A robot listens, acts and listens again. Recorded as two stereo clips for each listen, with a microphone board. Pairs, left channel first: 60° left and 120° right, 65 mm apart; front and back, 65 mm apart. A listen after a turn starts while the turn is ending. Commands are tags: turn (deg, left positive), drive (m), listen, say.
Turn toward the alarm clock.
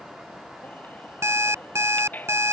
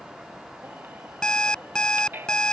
<turn deg="-75"/>
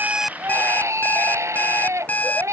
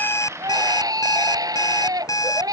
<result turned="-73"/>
<say>Found it: an alarm clock, straight ahead.</say>